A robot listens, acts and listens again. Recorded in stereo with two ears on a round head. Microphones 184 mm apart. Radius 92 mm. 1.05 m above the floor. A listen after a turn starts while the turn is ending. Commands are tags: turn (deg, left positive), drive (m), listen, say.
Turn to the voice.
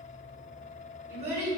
<turn deg="-30"/>
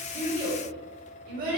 <turn deg="-135"/>
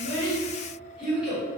<say>Found it: a child speaking, straight ahead, 1 to 2 m away.</say>